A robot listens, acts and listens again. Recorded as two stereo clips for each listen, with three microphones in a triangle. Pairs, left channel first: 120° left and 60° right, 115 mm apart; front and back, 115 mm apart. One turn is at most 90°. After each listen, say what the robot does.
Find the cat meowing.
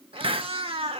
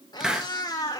Turn 50° right.
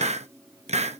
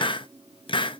Keep listening.
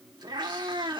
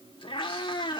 Turn 30° right.
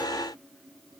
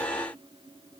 Keep listening.
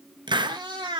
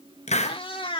Turn 25° right.
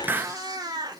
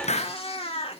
Turn 10° right.
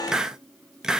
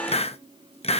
Keep listening.
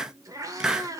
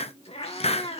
Found it: a cat meowing, straight ahead.